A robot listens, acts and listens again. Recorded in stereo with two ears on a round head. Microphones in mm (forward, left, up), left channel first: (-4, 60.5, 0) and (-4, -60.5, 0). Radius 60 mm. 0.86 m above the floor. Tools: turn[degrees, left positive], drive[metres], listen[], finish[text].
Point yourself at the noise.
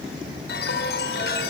Action: turn[90]
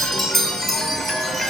Action: finish[Facing the chime.]